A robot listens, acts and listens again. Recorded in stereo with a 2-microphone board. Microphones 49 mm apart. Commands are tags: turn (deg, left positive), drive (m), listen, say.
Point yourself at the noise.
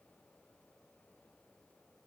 <listen/>
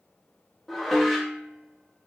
<turn deg="30"/>
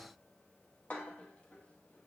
<turn deg="150"/>
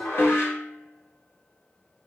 <turn deg="60"/>
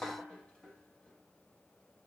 <turn deg="25"/>
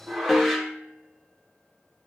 <say>Facing the dishes clattering.</say>